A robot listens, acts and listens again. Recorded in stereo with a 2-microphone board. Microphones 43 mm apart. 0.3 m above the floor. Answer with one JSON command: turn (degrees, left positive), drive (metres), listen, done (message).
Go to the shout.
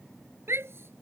{"turn": -90}
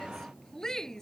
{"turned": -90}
{"turn": 10}
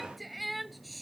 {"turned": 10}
{"drive": 1.0}
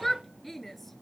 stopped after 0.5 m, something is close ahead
{"done": "Something is in my way. I am facing the shout but have not reached it."}